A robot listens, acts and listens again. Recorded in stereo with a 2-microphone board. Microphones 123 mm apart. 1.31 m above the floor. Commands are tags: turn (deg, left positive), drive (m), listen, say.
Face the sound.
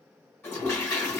<turn deg="20"/>
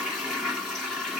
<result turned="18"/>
<say>Facing the toilet flushing.</say>